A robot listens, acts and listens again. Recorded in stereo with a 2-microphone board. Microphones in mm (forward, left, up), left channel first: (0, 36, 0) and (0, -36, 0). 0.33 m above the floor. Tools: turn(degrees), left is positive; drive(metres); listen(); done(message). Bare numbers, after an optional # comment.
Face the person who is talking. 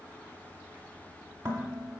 listen()
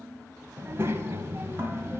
# The child speaking: about 35° right or 145° right.
turn(-35)
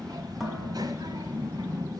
# So it is at 100° right.
turn(-100)
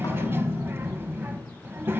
# The child speaking is now 35° right.
turn(-35)
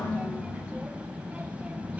# The child speaking is now 20° right.
turn(-20)
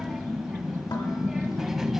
done("Facing the child speaking.")